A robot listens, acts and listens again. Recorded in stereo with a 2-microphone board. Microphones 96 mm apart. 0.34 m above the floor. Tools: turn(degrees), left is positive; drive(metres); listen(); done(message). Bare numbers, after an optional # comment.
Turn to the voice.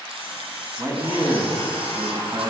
# The man speaking: about 50° right or 130° right.
turn(-50)
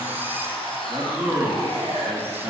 # So it is at 30° right.
turn(-30)
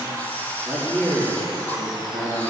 done("Facing the man speaking.")